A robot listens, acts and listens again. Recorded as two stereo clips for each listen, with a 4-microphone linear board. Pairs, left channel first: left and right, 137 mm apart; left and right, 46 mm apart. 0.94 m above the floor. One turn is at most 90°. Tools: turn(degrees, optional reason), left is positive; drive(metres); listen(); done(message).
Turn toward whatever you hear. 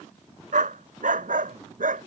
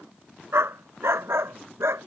turn(degrees=-90)
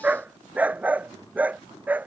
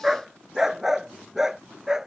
turn(degrees=-10, reason="So it is at 10° right.")
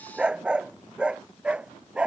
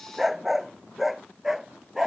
turn(degrees=-10, reason="The dog barking is now 10° right.")
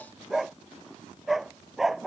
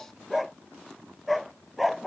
done("Found it: a dog barking, straight ahead.")